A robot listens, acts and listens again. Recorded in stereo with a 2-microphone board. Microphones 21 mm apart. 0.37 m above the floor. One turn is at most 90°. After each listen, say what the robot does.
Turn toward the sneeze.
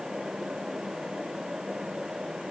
Keep listening.
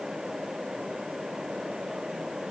Keep listening.
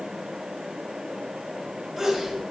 Turn 30° right.
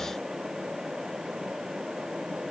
Keep listening.
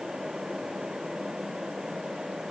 I heard a sneeze, but can't make it out now. It was about 25° left or 145° right.